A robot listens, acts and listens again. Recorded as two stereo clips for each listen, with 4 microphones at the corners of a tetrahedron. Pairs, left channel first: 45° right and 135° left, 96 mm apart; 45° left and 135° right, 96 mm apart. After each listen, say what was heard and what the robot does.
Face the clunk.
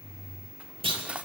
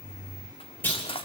The clunk: 115° left. Turn 115° left.
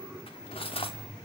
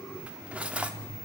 Facing where the clunk came from. I can't hear it now.